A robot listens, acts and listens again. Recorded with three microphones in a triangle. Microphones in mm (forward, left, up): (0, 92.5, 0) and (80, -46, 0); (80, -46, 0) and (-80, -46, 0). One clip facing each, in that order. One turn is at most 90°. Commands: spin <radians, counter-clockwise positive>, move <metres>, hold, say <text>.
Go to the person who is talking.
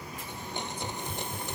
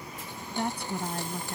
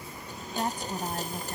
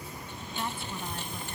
spin -0.79
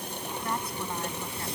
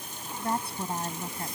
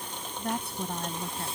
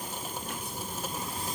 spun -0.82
move 1.0
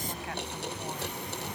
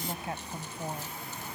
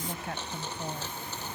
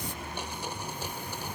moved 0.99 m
move 1.0
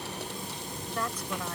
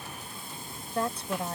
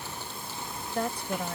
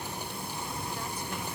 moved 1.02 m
move 1.0
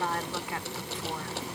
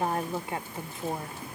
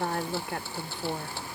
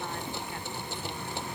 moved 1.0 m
move 1.0
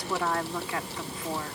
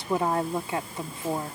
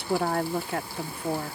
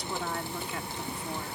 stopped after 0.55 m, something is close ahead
say I am next to the woman speaking.